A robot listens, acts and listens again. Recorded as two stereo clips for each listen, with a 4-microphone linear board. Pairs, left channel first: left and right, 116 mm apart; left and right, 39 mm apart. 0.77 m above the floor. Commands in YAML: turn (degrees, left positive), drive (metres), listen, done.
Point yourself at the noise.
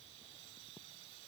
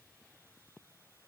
listen: true
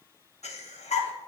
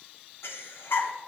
turn: 90
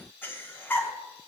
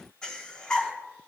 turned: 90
turn: 15
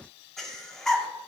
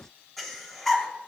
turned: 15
done: "Found it: breathing, straight ahead, under 1 m away."